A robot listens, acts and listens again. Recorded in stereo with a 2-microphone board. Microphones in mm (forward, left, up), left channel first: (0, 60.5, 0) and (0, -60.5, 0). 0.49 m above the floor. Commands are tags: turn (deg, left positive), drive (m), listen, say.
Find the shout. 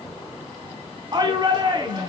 <turn deg="-40"/>
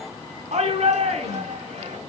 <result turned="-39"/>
<turn deg="-100"/>
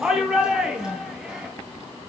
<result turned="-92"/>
<turn deg="-10"/>
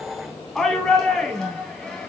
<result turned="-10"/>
<say>Found it: a shout, straight ahead, 2 to 4 m away.</say>